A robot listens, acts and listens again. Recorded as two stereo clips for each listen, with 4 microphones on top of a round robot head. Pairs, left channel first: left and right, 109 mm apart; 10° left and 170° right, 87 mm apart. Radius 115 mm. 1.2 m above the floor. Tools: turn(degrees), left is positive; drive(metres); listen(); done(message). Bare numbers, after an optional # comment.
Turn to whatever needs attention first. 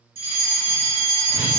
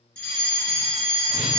# The fire alarm: 70° right.
turn(-70)
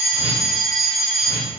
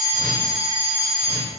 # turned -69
done("Facing the fire alarm.")